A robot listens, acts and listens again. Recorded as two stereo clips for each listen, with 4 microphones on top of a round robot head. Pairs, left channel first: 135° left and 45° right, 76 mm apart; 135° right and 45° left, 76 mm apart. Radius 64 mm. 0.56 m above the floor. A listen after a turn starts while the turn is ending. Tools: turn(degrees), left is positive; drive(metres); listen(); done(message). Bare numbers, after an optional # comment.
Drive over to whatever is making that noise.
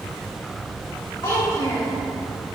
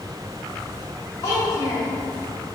# The child speaking: 175° left.
turn(175)
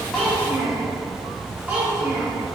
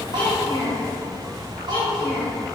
# The child speaking is now 15° left.
turn(15)
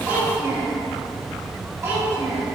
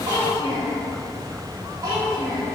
drive(1.0)
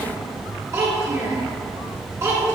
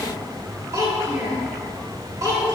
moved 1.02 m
drive(1.0)
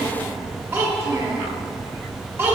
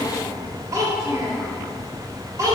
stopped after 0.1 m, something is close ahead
done("I am next to the child speaking.")